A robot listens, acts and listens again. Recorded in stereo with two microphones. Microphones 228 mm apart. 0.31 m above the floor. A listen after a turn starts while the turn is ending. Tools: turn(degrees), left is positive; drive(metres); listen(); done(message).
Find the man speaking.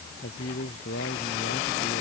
turn(degrees=90)
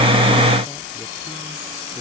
listen()
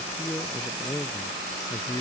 turn(degrees=15)
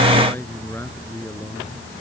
turn(degrees=10)
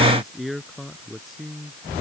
done("Found it: a man speaking, straight ahead.")